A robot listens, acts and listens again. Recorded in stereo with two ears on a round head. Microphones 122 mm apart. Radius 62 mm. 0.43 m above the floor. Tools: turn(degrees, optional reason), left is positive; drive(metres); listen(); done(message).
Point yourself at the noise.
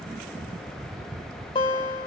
turn(degrees=35, reason="The guitar: about 35° left or 145° left.")
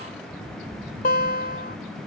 turn(degrees=110, reason="So it is at 110° left.")
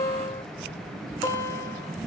turn(degrees=25, reason="The guitar is now 25° left.")
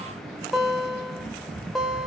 done("Facing the guitar, 1 to 2 m away.")